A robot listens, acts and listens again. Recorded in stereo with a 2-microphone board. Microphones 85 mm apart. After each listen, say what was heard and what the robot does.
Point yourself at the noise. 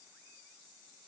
Keep listening.
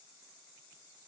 Keep listening.
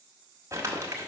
The crumpling: about 40° right or 140° right. Turn 40° right.
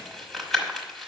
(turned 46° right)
Found it: crumpling, straight ahead.